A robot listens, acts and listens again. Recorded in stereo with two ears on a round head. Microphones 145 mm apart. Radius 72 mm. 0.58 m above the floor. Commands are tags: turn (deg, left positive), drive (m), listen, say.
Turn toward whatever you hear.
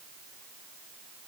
<listen/>
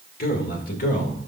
<turn deg="55"/>
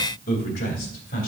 <turn deg="65"/>
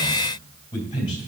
<turn deg="25"/>
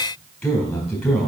<say>Found it: a man speaking, straight ahead.</say>